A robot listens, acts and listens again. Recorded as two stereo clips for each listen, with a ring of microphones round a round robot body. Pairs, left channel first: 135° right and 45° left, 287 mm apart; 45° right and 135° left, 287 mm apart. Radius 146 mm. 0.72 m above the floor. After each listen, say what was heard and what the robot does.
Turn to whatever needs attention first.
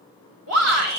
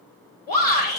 The shout: 10° left. Turn 10° left.
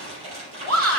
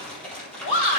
Facing the shout, 2 to 4 m away.